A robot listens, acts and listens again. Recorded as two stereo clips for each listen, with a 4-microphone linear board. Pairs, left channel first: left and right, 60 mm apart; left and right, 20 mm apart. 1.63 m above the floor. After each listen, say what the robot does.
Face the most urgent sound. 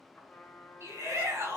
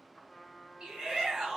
Turn 50° right.
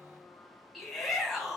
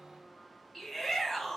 Facing the shout, 2 to 4 m away.